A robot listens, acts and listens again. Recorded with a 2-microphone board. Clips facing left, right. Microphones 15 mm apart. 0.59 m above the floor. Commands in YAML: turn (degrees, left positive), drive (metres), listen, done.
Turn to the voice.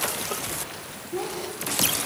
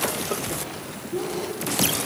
turn: 35
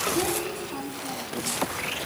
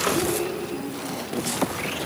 turn: 120
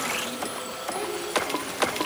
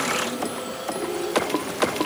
turn: 55
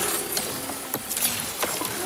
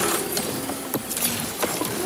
turn: 15
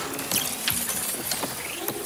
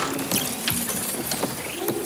listen: true
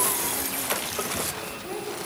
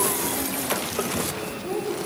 done: "Found it: a child speaking, straight ahead, over 4 m away."